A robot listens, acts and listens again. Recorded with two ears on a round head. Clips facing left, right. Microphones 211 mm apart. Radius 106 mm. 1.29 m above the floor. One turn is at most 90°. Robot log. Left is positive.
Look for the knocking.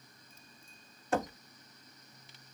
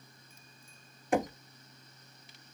cmd yaw -30
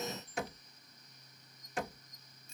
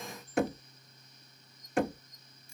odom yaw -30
note: So it is at 135° right.
cmd yaw -90
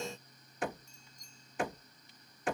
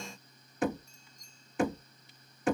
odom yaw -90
note: The knocking is now 75° right.
cmd yaw -75
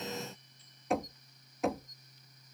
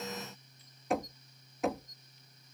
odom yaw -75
end: Facing the knocking.